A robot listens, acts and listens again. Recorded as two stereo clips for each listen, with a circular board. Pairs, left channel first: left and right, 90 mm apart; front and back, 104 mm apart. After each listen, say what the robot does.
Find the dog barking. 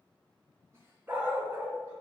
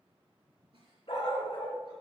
Turn 25° right.
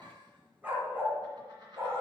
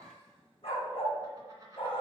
Turn 30° right.
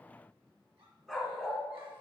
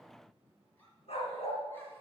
Found it: a dog barking, straight ahead, 2 to 4 m away.